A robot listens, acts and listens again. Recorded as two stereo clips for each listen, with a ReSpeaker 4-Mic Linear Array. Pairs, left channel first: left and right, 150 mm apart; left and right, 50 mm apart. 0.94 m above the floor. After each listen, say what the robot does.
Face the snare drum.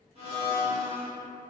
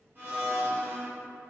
Keep listening.
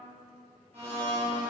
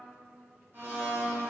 Keep listening.
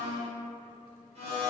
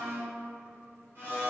I can't make out a snare drum, only a blender.